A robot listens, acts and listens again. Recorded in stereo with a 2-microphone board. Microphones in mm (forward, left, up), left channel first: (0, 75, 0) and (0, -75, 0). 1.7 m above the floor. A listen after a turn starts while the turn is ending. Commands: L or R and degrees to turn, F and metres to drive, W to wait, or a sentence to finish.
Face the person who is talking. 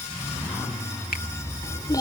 L25
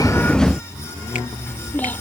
L30
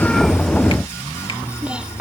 Facing the child speaking.